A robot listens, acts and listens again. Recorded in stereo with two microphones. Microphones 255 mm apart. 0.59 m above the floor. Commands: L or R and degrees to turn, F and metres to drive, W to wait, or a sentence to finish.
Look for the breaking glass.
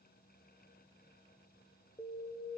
W
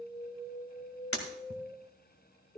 L60
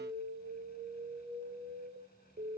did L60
W
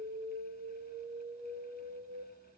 I heard breaking glass, but can't make it out now. It was about straight ahead or 60° left.